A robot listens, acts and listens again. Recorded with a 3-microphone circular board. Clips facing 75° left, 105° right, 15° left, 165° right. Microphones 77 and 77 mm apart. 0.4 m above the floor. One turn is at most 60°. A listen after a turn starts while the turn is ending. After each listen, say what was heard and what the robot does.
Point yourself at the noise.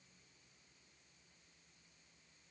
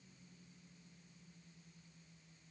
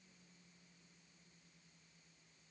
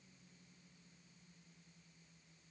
Keep listening.
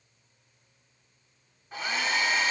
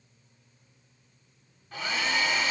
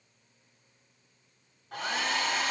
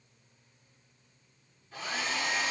Found it: a hair dryer, straight ahead, 1 to 2 m away.